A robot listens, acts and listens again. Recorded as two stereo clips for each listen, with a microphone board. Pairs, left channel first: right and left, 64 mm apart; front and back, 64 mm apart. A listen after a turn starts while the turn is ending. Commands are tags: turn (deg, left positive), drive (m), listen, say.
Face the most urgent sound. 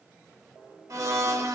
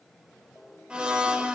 <listen/>
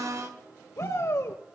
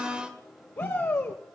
<turn deg="-50"/>
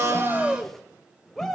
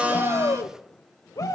<say>Found it: a shout, straight ahead, 1 to 2 m away.</say>